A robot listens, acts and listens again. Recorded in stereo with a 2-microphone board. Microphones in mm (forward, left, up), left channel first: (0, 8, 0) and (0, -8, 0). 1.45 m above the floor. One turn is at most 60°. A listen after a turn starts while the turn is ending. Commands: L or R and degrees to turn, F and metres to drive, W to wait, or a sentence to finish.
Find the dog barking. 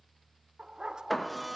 R60
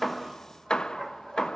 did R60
R30
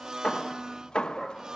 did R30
Facing the dog barking, 2 to 4 m away.